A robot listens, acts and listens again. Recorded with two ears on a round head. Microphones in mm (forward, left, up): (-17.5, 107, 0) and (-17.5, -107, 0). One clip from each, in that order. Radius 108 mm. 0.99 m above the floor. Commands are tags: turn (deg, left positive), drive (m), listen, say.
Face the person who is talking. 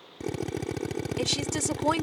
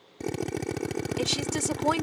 <turn deg="30"/>
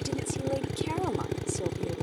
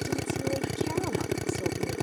<listen/>
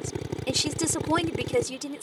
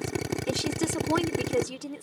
<turn deg="145"/>
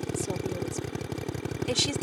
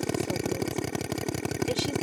<listen/>
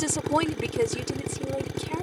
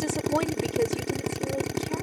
<turn deg="35"/>
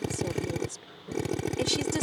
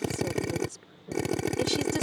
<turn deg="15"/>
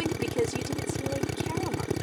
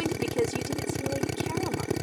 <say>Found it: a woman speaking, straight ahead.</say>